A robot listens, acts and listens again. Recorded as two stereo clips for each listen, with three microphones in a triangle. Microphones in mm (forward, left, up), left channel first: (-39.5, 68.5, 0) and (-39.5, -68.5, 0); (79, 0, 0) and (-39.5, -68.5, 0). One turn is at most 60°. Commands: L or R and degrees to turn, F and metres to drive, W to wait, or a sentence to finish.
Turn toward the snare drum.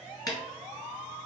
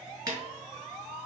L60
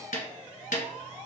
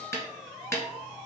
L60
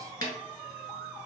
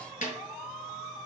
L35
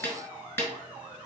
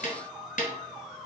L20
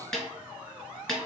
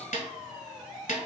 Facing the snare drum.